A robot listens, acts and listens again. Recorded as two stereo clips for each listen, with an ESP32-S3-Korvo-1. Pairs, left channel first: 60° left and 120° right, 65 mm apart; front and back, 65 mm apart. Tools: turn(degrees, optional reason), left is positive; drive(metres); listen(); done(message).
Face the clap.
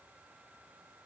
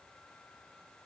listen()
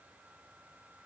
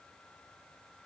listen()
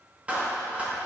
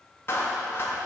turn(degrees=-50, reason="The clap: 50° right.")
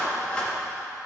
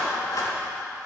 turn(degrees=-15, reason="The clap is now 15° right.")
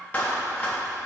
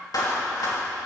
done("Found it: a clap, straight ahead.")